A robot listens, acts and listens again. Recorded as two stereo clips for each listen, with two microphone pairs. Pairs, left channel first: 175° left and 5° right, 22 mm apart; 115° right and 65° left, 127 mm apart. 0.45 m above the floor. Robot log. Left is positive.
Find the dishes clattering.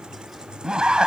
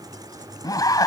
cmd idle
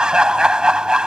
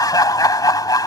cmd idle
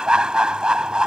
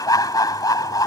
end: I can't make out dishes clattering to turn to.